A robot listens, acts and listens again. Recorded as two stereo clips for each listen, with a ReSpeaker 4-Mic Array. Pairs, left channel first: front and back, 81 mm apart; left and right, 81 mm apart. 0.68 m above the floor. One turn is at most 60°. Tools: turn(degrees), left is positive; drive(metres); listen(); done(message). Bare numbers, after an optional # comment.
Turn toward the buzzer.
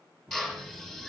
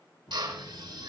# The buzzer: 105° left.
turn(60)
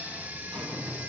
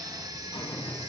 # The buzzer is now 75° left.
turn(60)
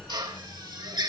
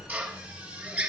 # The buzzer is now 25° left.
turn(25)
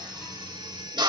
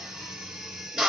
# The buzzer is now 15° left.
turn(15)
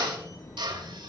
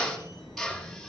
done("Found it: a buzzer, straight ahead.")